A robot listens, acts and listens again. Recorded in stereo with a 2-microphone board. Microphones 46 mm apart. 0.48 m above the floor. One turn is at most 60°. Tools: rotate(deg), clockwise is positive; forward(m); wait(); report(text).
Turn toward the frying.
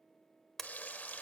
rotate(-35)
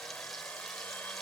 wait()
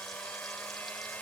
wait()
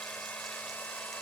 report("I heard frying, but can't make it out now. It was about straight ahead or 110° left.")